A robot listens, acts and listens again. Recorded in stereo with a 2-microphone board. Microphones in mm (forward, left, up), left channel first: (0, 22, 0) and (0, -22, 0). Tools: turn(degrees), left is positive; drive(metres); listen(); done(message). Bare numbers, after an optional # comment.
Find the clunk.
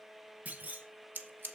# The clunk: about 35° right or 145° right.
turn(-35)
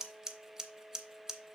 listen()
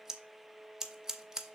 done("I heard a clunk, but can't make it out now. It was about straight ahead or 110° right.")